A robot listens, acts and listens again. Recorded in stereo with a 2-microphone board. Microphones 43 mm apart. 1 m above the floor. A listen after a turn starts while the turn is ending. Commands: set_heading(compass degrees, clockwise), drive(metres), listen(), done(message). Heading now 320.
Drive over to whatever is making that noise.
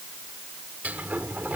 set_heading(0)
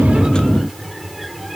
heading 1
drive(1.0)
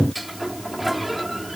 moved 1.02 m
drive(1.0)
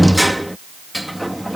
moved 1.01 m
drive(1.0)
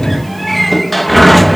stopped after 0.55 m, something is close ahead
done("I am next to the sliding door.")